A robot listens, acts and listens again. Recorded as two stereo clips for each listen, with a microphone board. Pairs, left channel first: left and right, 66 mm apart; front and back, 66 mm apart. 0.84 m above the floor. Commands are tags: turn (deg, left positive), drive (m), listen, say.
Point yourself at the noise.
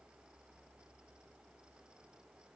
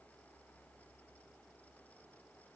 <listen/>
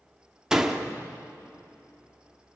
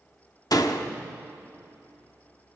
<turn deg="-10"/>
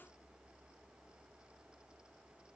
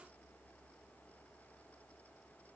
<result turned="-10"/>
<say>Facing where the door slam came from. I can't hear it now.</say>